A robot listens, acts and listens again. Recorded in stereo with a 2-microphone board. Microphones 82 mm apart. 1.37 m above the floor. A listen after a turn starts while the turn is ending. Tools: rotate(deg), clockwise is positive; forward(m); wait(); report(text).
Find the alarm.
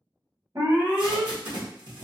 rotate(35)
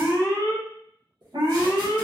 rotate(105)
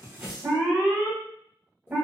rotate(15)
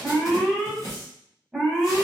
report("Facing the alarm, 1 to 2 m away.")